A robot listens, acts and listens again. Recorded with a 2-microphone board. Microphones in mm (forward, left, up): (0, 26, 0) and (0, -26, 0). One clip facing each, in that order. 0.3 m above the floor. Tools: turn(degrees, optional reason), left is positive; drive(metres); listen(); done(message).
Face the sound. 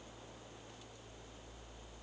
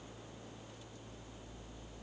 listen()
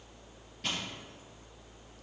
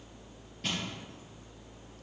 turn(degrees=30)
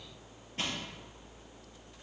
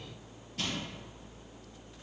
turn(degrees=150, reason="So it is at 150° left.")
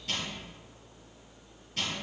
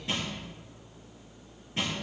turn(degrees=-25, reason="The crushing is now 25° right.")
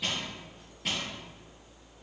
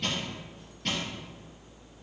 turn(degrees=10, reason="The crushing is now 10° left.")
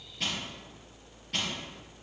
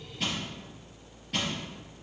done("Found it: crushing, straight ahead.")